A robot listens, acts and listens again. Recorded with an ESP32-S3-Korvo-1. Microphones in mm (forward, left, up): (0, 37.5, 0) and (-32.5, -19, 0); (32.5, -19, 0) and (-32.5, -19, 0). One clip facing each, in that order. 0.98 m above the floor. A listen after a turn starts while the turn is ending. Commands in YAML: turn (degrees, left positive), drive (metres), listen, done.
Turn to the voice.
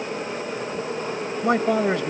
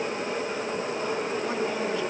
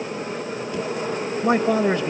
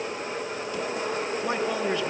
turn: 35
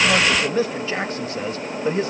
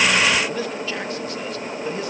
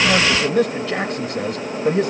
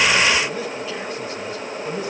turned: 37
done: "Found it: a man speaking, straight ahead, 1 to 2 m away."